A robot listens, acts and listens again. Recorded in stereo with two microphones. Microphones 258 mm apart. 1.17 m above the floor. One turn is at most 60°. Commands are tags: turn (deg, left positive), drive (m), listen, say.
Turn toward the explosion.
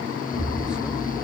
<turn deg="-60"/>
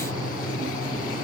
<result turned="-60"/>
<turn deg="-30"/>
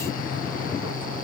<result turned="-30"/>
<say>Facing where the explosion came from. I can't hear it now.</say>